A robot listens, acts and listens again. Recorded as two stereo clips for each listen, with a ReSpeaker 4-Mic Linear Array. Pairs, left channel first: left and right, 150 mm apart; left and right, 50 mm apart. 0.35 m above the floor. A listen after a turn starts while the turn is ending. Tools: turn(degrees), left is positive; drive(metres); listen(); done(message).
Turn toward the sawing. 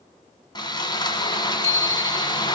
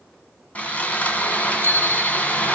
turn(degrees=30)
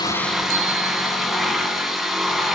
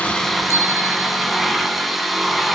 done("Facing the sawing.")